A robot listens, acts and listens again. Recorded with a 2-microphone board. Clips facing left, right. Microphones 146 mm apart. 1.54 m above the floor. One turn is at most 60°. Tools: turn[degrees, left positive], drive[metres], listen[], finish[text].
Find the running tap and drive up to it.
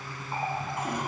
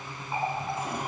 Action: turn[-30]
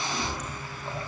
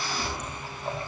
Thought: So it is at 145° right.
Action: turn[-60]
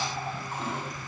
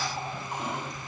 Thought: Nothing new. It was at 85° right.
Action: turn[-60]
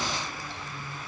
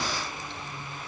Thought: Nothing new. It was at 25° right.
Action: turn[-25]
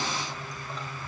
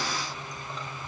Action: finish[I heard a running tap from this way, but can't make it out now. I did not reach it.]